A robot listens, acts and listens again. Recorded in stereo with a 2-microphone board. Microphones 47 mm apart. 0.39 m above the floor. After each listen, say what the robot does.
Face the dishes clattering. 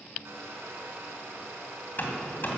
Keep listening.
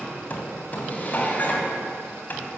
Turn 40° left.
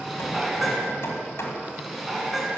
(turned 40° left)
Facing the dishes clattering.